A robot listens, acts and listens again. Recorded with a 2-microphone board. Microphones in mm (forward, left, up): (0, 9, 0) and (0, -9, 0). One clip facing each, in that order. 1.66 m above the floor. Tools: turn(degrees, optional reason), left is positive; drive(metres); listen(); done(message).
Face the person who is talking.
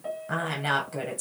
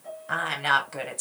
turn(degrees=-25, reason="The woman speaking: about 25° right or 155° right.")
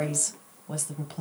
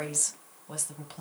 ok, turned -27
done("Facing the woman speaking.")